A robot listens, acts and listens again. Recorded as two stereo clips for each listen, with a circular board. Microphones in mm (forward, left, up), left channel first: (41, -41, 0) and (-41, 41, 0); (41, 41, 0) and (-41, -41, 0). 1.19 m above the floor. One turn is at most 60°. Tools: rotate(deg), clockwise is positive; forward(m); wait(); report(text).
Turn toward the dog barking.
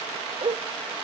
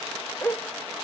rotate(-60)
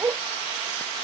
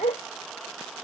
rotate(-60)
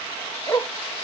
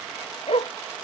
rotate(-20)
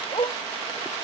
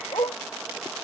report("Facing the dog barking.")